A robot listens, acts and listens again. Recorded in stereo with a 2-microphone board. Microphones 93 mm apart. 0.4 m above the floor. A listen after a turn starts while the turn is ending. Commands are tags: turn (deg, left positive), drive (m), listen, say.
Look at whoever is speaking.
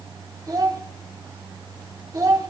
<turn deg="-40"/>
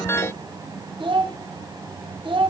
<turn deg="-95"/>
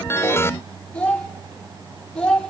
<turn deg="15"/>
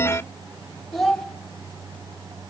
<say>Facing the child speaking.</say>